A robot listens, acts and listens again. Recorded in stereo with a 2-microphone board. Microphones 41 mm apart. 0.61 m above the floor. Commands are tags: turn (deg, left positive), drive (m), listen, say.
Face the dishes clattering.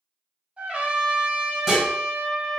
<turn deg="-30"/>
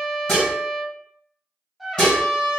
<turn deg="25"/>
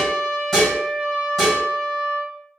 <turn deg="10"/>
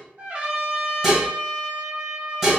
<say>Found it: dishes clattering, straight ahead, 2 to 4 m away.</say>